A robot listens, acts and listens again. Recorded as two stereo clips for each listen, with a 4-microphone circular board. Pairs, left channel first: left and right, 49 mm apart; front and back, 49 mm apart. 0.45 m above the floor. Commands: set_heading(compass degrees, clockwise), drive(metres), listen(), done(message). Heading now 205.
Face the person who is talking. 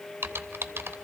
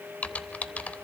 listen()
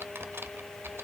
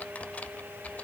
listen()
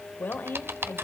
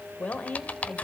set_heading(150)
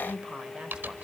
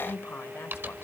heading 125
set_heading(150)
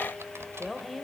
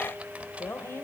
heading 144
done("Facing the woman speaking.")